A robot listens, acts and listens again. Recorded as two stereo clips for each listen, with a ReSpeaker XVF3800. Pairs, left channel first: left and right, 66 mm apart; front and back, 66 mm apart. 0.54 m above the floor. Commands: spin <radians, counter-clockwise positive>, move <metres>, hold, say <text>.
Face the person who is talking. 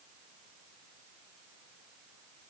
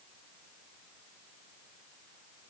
hold
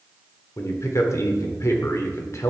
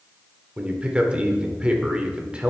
spin 1.92
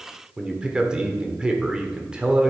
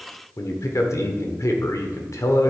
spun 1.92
spin -0.35
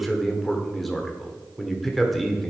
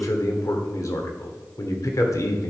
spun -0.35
say Facing the man speaking.